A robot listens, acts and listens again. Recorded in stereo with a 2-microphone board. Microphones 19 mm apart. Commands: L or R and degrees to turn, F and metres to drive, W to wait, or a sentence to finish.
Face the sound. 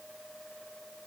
W
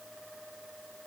W
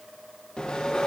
L50
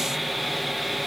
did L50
Facing the sawing.